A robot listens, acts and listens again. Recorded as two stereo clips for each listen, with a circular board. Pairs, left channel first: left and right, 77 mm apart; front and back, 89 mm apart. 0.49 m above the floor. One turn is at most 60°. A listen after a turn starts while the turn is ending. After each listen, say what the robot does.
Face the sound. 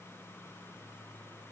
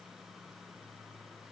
Keep listening.
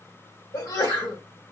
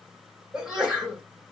Turn 60° left.
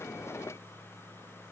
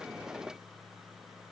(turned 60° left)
Turn 40° left.
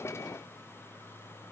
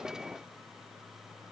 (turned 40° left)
Facing where the sneeze came from. I can't hear it now.